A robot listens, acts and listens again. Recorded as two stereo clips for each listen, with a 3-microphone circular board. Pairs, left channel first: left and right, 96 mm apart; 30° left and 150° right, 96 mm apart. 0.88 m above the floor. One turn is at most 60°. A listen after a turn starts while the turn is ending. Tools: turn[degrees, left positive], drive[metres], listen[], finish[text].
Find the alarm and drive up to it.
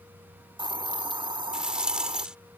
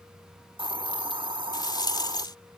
Action: listen[]
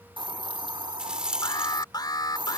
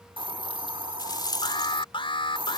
Thought: The alarm: 50° left.
Action: turn[50]
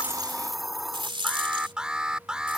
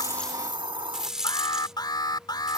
Thought: The alarm is now 10° right.
Action: turn[-10]
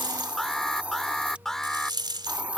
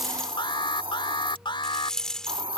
Action: drive[1.0]
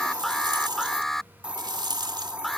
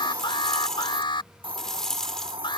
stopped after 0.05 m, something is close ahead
Action: finish[Something is in my way. I am facing the alarm but have not reached it.]